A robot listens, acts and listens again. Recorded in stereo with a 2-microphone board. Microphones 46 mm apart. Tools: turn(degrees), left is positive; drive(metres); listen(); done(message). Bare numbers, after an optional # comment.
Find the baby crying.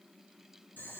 listen()
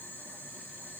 listen()
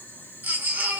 # The baby crying: about 45° right or 135° right.
turn(-45)
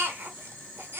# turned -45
# So it is at 85° right.
turn(-85)
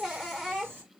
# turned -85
done("Found it: a baby crying, straight ahead, 1 to 2 m away.")